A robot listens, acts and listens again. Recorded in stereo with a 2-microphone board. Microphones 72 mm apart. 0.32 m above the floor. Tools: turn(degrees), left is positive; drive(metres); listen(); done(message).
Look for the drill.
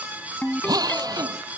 turn(degrees=-60)
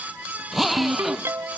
done("Facing the drill.")